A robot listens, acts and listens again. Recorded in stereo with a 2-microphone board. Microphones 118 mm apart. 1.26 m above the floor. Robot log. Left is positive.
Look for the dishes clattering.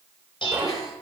note: The dishes clattering: about 45° left or 135° left.
cmd yaw +45
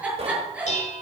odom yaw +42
note: So it is at 90° left.
cmd yaw +90
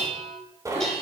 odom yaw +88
end: Facing the dishes clattering, over 4 m away.